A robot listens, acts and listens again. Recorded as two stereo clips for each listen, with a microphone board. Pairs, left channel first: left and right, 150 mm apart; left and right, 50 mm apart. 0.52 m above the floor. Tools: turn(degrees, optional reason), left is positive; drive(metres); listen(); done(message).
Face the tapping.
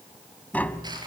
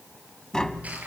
turn(degrees=30)
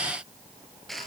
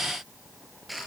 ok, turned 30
listen()
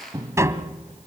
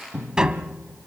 turn(degrees=-20, reason="So it is at 20° right.")
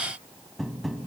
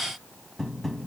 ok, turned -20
done("Facing the tapping.")